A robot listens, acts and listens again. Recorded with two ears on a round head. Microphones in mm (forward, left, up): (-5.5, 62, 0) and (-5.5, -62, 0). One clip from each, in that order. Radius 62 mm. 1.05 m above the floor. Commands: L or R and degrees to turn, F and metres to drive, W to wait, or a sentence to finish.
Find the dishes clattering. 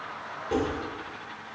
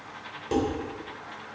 R45
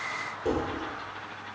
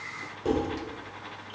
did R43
Facing the dishes clattering, 2 to 4 m away.